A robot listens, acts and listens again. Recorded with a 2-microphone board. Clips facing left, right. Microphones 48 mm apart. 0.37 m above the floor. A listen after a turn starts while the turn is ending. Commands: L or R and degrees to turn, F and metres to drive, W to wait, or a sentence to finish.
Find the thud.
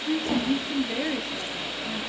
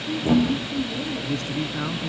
R30
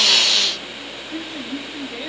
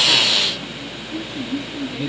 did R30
W
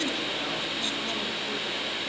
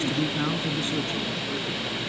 I heard a thud, but can't make it out now. It was about 20° left or 140° right.